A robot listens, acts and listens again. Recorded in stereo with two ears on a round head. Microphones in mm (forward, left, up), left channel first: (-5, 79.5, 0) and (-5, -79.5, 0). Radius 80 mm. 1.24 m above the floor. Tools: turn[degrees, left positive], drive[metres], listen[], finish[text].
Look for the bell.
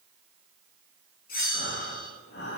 Thought: The bell: about 55° left or 125° left.
Action: turn[55]
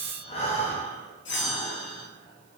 Thought: So it is at 70° left.
Action: turn[70]
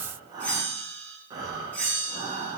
Thought: The bell is now 10° left.
Action: turn[10]
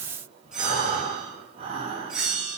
Action: finish[Facing the bell, under 1 m away.]